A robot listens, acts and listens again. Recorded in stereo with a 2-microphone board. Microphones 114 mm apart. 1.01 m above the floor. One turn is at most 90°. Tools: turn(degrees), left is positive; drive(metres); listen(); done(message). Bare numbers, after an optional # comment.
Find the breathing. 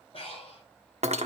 # The breathing: about 55° left or 125° left.
turn(55)
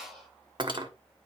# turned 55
done("Found it: breathing, straight ahead, over 4 m away.")